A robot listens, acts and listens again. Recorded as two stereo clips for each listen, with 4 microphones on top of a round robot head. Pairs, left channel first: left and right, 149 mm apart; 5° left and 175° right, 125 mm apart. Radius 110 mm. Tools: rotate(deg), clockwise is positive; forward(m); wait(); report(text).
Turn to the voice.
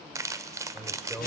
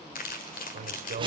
rotate(-180)
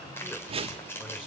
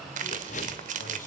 wait()
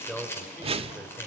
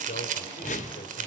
rotate(-10)
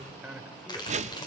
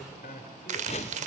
report("Found it: a man speaking, straight ahead.")